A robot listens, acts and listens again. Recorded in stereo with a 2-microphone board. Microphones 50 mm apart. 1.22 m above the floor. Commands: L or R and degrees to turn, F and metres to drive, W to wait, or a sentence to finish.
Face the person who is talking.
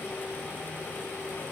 W
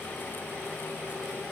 W
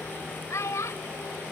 L75
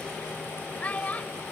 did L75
L30
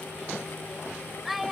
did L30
Facing the child speaking.